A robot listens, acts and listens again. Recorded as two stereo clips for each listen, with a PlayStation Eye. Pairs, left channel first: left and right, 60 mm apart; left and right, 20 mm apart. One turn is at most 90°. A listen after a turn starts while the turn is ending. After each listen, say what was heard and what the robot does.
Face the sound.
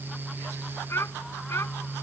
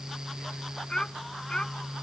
The child speaking: about 45° left or 135° left. Turn 45° left.
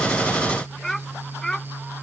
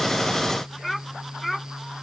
Found it: a child speaking, straight ahead.